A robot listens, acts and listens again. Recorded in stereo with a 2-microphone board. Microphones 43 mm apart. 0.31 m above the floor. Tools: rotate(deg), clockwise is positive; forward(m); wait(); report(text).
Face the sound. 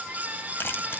rotate(-55)
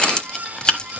rotate(-25)
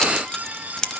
rotate(-20)
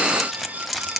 report("Found it: keys jangling, straight ahead, under 1 m away.")